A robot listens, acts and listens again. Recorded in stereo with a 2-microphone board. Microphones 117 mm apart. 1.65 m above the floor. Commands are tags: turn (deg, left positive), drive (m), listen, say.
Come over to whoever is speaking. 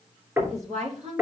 <turn deg="-70"/>
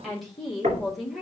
<drive m="1.0"/>
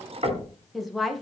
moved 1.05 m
<drive m="1.0"/>
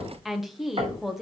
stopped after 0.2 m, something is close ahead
<say>Arrived at the woman speaking, straight ahead.</say>